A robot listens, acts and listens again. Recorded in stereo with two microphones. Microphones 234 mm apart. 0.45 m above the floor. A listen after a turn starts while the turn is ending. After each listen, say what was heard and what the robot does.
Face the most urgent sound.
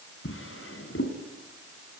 Keep listening.
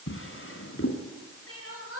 The crying: about 70° left or 110° left. Turn 70° left.
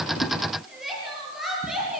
Facing the crying.